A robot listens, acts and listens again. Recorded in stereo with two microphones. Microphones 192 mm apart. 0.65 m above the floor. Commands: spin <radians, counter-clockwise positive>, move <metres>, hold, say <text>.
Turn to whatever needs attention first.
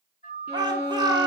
spin -0.35
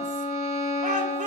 spin -2.44
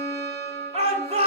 spin -0.61
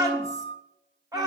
spin -0.35
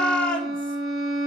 say Facing the shout.